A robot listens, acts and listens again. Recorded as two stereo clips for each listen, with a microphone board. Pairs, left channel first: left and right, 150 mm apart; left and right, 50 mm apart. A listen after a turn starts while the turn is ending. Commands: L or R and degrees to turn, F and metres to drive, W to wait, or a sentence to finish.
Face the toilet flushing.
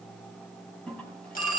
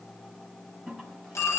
L30
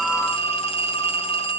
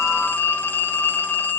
W
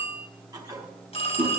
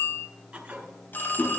R25
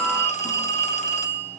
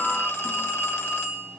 W
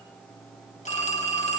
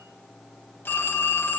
W
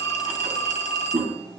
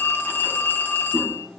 R15
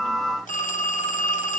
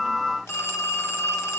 W
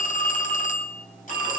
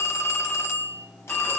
W
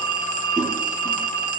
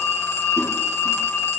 Facing where the toilet flushing came from. I can't hear it now.